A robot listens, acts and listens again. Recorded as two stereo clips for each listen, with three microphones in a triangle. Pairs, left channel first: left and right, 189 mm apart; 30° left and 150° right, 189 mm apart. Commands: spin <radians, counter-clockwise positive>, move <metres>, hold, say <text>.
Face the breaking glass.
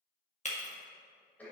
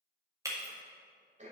spin 2.44
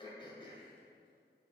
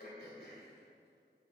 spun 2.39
say Facing where the breaking glass came from. I can't hear it now.